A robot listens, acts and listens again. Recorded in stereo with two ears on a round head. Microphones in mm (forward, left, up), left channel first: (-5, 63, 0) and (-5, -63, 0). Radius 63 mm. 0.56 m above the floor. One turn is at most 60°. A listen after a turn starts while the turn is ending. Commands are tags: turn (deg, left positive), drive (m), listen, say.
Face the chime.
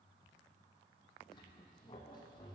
<listen/>
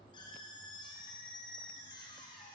<listen/>
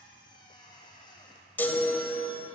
<turn deg="30"/>
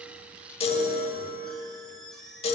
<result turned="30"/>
<turn deg="60"/>
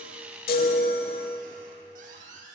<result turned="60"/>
<turn deg="60"/>
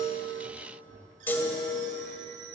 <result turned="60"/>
<turn deg="15"/>
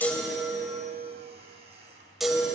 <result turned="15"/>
<say>Facing the chime.</say>